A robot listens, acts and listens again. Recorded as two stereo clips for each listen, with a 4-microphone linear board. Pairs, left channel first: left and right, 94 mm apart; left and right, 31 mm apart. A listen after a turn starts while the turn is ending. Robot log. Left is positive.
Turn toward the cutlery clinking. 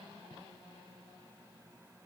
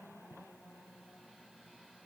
cmd idle
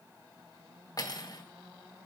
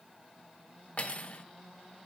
note: The cutlery clinking: about 45° left or 135° left.
cmd yaw +45
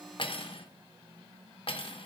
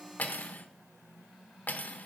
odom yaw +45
note: So it is at 85° left.
cmd yaw +85
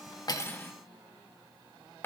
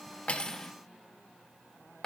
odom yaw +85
note: The cutlery clinking is now 25° left.
cmd yaw +25
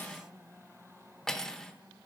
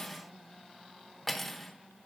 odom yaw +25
end: Facing the cutlery clinking, under 1 m away.